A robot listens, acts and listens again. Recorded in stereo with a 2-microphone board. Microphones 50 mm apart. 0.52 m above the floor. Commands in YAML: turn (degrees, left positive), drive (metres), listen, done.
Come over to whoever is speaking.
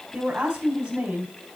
turn: -15
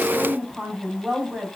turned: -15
drive: 1.0
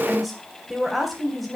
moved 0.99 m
drive: 1.0
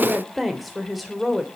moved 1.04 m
drive: 1.0
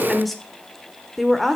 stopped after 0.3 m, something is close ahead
done: "I am next to the woman speaking."